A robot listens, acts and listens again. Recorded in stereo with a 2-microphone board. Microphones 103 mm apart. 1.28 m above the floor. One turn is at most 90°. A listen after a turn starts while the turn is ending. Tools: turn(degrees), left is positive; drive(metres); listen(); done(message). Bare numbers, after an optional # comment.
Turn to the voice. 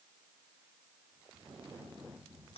listen()
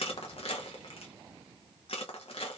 listen()
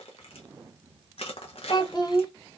# The child speaking: about 40° left or 140° left.
turn(40)
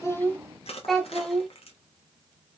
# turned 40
done("Facing the child speaking.")